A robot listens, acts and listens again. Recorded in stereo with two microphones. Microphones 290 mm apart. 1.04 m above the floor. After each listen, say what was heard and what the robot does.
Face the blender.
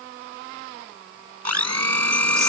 The blender: about 65° right or 115° right. Turn 65° right.
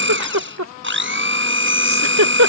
So it is at 45° right. Turn 45° right.
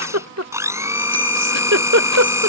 The blender is now 10° right. Turn 10° right.
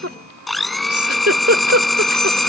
Found it: a blender, straight ahead.